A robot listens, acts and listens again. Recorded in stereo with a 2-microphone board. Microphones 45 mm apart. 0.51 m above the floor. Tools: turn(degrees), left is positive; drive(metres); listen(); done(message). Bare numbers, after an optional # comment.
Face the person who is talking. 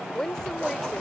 turn(30)
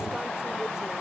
listen()
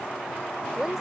# So it is at 20° right.
turn(-20)
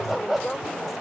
done("Found it: a woman speaking, straight ahead.")